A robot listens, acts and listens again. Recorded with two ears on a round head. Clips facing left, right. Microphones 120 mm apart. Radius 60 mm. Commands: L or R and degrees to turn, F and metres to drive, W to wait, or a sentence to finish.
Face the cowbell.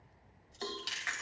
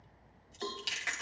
L30
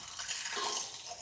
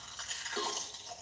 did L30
W
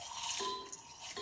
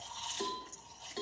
R20
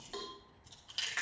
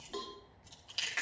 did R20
W
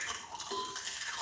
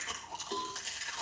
Facing the cowbell.